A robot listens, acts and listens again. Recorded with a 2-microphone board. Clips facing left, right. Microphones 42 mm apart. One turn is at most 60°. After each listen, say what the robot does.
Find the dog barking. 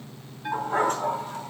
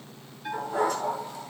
Turn 55° left.
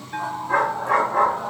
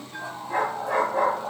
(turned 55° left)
Turn 55° left.
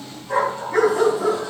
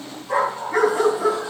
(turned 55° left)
Turn 25° right.
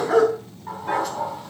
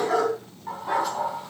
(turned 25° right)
Facing the dog barking.